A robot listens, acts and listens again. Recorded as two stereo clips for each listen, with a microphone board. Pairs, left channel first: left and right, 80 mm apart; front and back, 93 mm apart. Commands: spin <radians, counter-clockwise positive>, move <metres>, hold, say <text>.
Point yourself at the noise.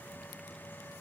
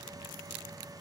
hold
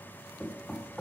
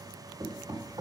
spin 2.97
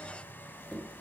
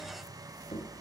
say Found it: knocking, straight ahead, 2 to 4 m away.